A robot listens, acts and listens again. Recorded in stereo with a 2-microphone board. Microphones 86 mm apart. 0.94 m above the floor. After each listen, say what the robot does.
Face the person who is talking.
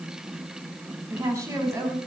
Turn 35° right.
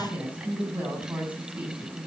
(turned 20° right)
Turn 15° right.
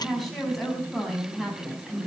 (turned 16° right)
Facing the woman speaking, over 4 m away.